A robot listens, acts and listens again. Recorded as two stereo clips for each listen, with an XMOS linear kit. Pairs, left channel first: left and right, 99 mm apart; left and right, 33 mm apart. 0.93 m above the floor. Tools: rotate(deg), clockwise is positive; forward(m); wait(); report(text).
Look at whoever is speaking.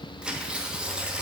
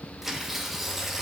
wait()
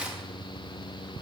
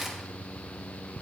wait()
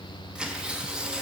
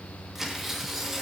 report("I can't make out anyone speaking to turn to.")